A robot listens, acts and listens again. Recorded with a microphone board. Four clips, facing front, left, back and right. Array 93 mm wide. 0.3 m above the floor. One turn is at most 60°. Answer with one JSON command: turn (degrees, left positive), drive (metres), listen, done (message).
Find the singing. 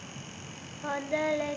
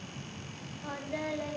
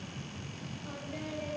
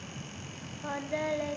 {"turn": -15}
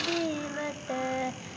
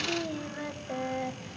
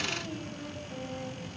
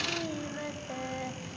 {"done": "Facing the singing."}